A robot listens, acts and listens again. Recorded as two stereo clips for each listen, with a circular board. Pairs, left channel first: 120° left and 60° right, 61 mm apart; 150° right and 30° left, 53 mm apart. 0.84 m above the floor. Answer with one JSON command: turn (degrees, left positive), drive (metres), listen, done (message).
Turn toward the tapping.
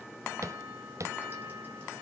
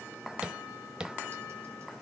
{"turn": -40}
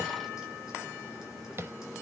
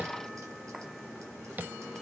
{"turn": -20}
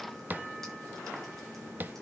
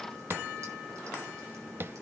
{"done": "Facing the tapping."}